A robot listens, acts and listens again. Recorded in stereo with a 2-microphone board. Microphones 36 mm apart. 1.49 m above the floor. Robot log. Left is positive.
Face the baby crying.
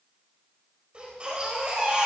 note: The baby crying: about 35° right or 145° right.
cmd yaw -35
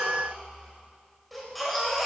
end: Found it: a baby crying, straight ahead, over 4 m away.